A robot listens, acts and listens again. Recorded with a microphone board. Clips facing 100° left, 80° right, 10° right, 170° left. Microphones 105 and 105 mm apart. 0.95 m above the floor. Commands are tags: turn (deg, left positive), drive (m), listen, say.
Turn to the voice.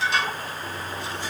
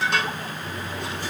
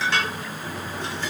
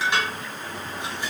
<listen/>
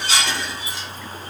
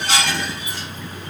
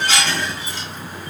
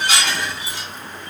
<listen/>
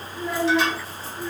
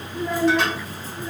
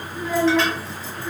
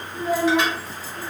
<turn deg="-135"/>
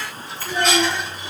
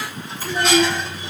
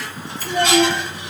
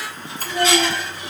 <turn deg="10"/>
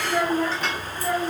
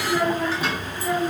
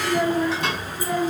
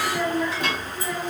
<say>Facing the child speaking, 2 to 4 m away.</say>